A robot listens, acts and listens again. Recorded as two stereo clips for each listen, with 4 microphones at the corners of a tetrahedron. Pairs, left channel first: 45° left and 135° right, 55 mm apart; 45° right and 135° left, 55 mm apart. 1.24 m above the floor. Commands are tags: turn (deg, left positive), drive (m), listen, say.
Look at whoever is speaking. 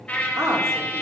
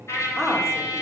<turn deg="-130"/>
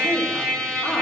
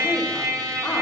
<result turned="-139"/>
<turn deg="10"/>
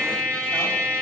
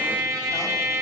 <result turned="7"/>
<listen/>
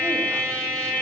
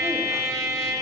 <say>Facing where the woman speaking came from. I can't hear it now.</say>